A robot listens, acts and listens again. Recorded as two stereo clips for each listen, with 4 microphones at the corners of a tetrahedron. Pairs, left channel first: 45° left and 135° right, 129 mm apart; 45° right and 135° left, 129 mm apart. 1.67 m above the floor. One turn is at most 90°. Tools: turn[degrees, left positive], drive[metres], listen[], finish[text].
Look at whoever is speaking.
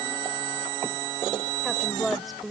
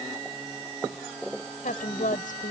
Thought: The woman speaking: 45° right.
Action: turn[-45]
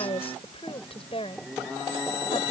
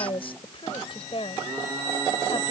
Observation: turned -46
Action: finish[Found it: a woman speaking, straight ahead.]